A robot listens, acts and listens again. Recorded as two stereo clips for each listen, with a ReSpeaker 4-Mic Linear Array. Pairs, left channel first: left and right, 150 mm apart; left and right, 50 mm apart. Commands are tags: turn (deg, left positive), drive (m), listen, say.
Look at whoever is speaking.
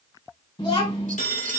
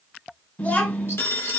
<turn deg="30"/>
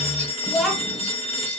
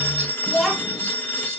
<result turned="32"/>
<say>Facing the child speaking.</say>